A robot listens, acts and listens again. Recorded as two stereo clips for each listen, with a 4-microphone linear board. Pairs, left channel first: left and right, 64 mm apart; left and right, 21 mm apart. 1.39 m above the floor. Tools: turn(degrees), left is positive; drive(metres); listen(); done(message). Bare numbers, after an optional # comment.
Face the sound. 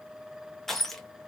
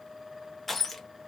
turn(30)
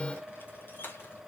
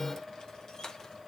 # So it is at 145° left.
turn(145)
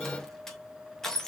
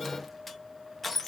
done("Facing the crushing.")